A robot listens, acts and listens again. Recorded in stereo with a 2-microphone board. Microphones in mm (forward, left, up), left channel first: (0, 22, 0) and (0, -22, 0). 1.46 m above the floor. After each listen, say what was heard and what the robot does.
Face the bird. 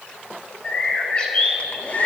The bird: about 25° left or 155° left. Turn 25° left.
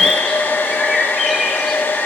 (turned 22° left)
Facing the bird.